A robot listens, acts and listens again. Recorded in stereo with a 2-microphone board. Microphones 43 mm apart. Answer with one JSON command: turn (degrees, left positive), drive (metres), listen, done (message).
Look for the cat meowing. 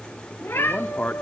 {"turn": 90}
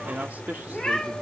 {"done": "Found it: a cat meowing, straight ahead."}